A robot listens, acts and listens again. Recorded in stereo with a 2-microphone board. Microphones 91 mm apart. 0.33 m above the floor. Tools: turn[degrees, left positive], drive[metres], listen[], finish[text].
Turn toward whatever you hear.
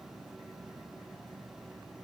Action: listen[]
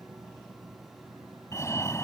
Thought: The fire alarm: about 30° left or 150° left.
Action: turn[30]
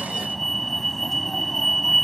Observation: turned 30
Action: finish[Facing the fire alarm.]